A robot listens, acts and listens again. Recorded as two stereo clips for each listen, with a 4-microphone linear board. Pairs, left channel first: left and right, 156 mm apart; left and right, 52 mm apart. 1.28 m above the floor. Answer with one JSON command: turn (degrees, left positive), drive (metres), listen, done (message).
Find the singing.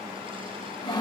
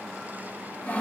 {"listen": true}
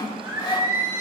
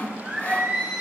{"turn": -20}
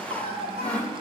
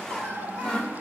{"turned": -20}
{"turn": -140}
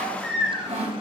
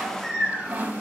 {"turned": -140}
{"done": "Found it: singing, straight ahead, over 4 m away."}